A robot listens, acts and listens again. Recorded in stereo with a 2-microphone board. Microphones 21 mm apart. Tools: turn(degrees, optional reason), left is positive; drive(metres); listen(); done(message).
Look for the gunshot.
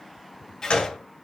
turn(degrees=70, reason="The gunshot: about 70° left or 110° left.")
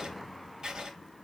listen()
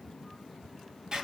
done("I heard a gunshot, but can't make it out now. It was about straight ahead or 40° left.")